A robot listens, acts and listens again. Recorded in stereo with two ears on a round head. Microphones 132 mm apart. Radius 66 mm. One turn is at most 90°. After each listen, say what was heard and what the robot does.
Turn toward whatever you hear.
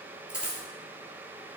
Turn 30° right.
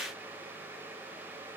Keep listening.
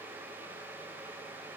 I heard a dropped coin, but can't make it out now. It was about 20° left or 140° right.